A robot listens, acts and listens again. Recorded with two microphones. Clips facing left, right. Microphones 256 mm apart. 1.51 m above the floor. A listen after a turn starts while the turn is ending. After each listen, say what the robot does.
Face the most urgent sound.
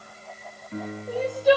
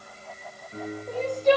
Turn 30° left.
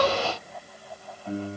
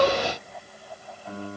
Keep listening.
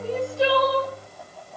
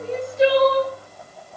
Turn 20° right.
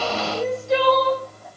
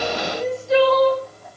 Facing the crying.